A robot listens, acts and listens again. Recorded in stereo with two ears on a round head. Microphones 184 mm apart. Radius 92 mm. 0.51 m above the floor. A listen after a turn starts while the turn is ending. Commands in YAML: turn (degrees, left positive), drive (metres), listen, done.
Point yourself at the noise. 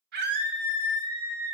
turn: -55
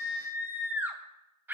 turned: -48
turn: -10
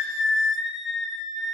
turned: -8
done: "Found it: a scream, straight ahead, 2 to 4 m away."